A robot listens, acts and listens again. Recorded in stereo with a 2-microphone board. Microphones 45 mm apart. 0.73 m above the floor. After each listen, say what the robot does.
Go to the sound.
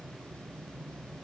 Keep listening.
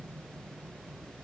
Keep listening.
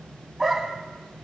Turn 30° right.
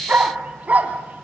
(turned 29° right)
Turn 145° right.
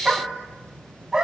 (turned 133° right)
Turn 15° right.
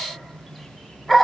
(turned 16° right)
Drive 1.0 m forward.
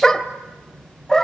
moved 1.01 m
Turn 15° left.
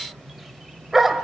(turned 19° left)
Drive 1.0 m forward.
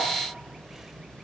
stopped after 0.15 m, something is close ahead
Keep listening.
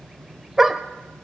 I am next to the dog barking.